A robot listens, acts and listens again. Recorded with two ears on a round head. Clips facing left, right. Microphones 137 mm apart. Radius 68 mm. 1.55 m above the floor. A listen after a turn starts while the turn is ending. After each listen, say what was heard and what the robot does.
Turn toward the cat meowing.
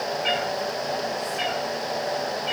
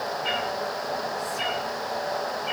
The cat meowing: about 60° left or 120° left. Turn 60° left.
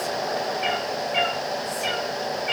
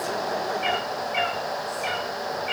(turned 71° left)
So it is at 55° left. Turn 55° left.
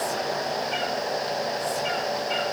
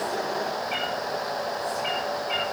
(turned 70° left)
The cat meowing is now 10° right. Turn 10° right.
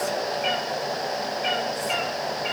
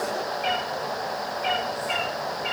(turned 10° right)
Found it: a cat meowing, straight ahead, over 4 m away.